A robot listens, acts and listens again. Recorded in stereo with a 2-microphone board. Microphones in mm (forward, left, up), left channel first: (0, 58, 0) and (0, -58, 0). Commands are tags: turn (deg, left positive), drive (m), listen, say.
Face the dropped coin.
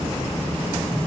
<listen/>
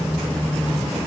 <listen/>
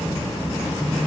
<say>I can't make out a dropped coin to turn to.</say>